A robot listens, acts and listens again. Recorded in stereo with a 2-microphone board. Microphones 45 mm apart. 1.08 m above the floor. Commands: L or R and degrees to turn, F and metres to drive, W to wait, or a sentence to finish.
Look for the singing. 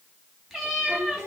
R75
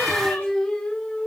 L25
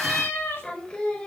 L25
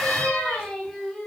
L10
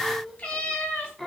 Facing the singing.